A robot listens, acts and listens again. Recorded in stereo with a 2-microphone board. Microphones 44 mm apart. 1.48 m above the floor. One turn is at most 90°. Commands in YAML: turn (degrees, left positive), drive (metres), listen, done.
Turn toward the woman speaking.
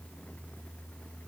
listen: true
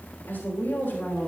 turn: 55
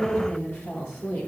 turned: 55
turn: 70
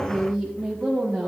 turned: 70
done: "Found it: a woman speaking, straight ahead, 1 to 2 m away."